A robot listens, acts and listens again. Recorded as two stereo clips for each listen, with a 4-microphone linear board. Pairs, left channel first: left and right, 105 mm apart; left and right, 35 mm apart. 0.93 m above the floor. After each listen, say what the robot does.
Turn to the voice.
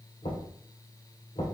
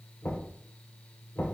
Keep listening.
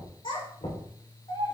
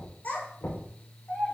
Turn 55° left.
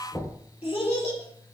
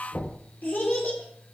Turn 70° left.
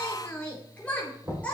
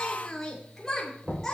Turn 15° left.
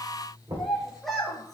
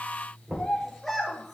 Found it: a child speaking, straight ahead, 2 to 4 m away.